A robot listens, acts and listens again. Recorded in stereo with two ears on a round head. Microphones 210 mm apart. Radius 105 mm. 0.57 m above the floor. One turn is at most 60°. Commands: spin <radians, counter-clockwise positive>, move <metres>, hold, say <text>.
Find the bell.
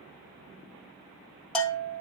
spin 0.52
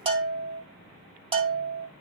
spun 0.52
spin -0.44
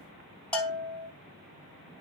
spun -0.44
say Found it: a bell, straight ahead.